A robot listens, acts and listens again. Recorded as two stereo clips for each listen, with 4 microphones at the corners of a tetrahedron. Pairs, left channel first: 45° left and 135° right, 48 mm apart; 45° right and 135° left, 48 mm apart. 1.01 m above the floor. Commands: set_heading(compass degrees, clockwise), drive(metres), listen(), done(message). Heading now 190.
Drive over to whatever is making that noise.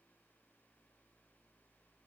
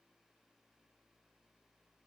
listen()
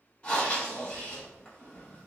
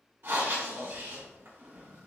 set_heading(80)
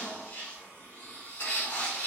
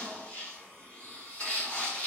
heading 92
set_heading(77)
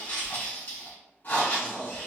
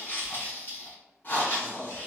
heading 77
drive(1.0)
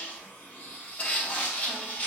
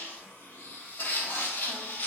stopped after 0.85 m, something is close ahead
done("I am next to the breathing.")